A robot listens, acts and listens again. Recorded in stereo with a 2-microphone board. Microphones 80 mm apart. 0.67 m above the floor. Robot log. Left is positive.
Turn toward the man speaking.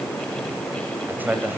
note: The man speaking: about 25° right or 155° right.
cmd yaw -25
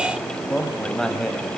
end: Found it: a man speaking, straight ahead, over 4 m away.